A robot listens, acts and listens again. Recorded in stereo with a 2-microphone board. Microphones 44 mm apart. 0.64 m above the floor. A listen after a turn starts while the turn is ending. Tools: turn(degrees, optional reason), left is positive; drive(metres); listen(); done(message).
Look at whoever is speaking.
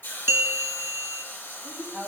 turn(degrees=-20, reason="The woman speaking: about 20° right or 160° right.")
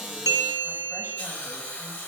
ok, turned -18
listen()
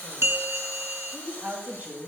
turn(degrees=-140, reason="So it is at 140° right.")
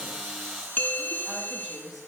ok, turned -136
done("Found it: a woman speaking, straight ahead.")